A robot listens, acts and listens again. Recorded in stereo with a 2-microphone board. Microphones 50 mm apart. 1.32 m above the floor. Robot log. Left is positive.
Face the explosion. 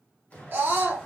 note: The explosion: about 35° left or 145° left.
cmd yaw +35
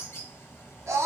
cmd idle
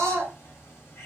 end: I heard an explosion, but can't make it out now. It was about straight ahead or 110° left.